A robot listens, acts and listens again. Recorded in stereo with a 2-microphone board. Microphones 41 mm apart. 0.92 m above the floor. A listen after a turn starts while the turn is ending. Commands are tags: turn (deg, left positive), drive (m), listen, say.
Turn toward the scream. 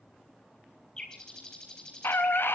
<turn deg="60"/>
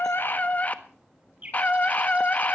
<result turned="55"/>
<turn deg="45"/>
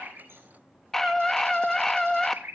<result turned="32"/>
<turn deg="10"/>
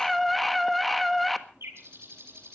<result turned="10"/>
<say>Found it: a scream, straight ahead, 1 to 2 m away.</say>